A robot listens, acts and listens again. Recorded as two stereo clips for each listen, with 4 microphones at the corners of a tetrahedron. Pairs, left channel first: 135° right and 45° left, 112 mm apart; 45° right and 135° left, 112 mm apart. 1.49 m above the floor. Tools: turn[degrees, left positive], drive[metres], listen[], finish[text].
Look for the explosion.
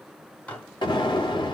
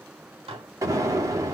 Thought: The explosion: 170° right.
Action: turn[-170]
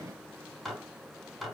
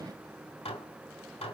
Action: finish[I heard an explosion from this way, but can't make it out now.]